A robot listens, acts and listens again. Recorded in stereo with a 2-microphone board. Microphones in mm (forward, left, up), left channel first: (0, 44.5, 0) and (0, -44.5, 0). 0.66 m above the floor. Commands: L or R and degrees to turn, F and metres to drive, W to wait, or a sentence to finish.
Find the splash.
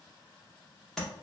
W
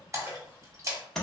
R35
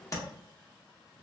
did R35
W
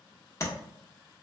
I heard a splash, but can't make it out now. It was about straight ahead or 110° right.